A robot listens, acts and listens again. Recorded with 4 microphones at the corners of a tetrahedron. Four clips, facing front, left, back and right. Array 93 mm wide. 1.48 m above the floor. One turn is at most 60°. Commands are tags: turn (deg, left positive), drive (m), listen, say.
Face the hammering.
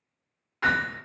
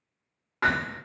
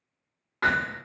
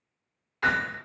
<turn deg="60"/>
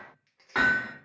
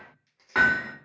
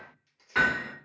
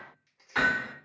<turn deg="55"/>
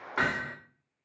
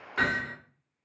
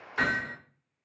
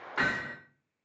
<say>Facing the hammering.</say>